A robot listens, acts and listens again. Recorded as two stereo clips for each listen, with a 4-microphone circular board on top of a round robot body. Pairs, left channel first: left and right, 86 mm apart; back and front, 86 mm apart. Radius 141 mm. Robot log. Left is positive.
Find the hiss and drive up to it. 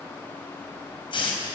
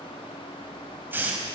note: The hiss: 70° left.
cmd yaw +70
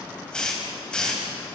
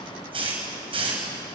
note: The hiss is now 10° left.
cmd yaw +10
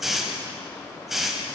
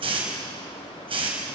cmd fwd 1.0
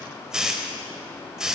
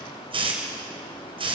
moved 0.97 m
cmd fwd 1.0
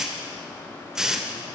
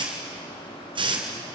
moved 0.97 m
cmd fwd 1.0
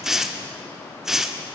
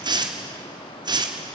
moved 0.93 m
cmd fwd 1.0
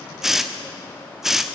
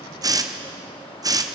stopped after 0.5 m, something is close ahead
end: I am next to the hiss.